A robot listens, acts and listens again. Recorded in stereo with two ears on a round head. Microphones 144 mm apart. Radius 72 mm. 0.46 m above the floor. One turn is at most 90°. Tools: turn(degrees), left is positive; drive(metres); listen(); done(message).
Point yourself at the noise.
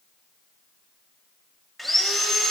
turn(degrees=30)
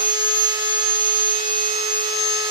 turn(degrees=-30)
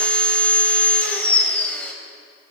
turn(degrees=10)
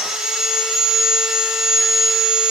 done("Found it: sawing, straight ahead.")